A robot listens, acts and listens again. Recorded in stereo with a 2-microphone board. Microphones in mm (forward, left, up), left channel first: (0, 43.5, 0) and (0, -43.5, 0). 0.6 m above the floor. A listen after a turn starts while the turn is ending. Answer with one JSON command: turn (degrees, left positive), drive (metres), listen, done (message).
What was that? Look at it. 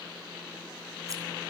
{"listen": true}
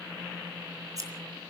{"turn": -40}
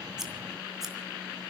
{"listen": true}
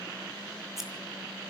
{"listen": true}
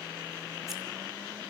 {"done": "I heard scissors, but can't make it out now. It was about straight ahead or 100° right."}